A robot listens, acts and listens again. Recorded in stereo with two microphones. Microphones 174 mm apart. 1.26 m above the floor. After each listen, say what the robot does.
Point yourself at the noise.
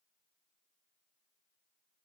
Keep listening.
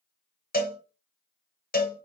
Turn 60° left.
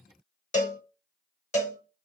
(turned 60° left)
Turn 50° left.
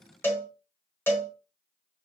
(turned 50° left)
Turn 15° left.
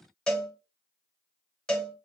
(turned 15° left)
Facing the cowbell.